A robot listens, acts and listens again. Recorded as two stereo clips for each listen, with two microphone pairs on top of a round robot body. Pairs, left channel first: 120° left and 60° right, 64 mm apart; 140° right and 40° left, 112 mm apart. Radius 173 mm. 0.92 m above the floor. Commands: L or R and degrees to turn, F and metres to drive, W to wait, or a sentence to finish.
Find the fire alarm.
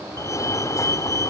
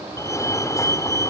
L160
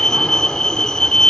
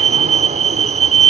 L40
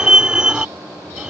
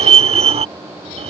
L15
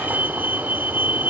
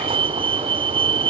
Found it: a fire alarm, straight ahead.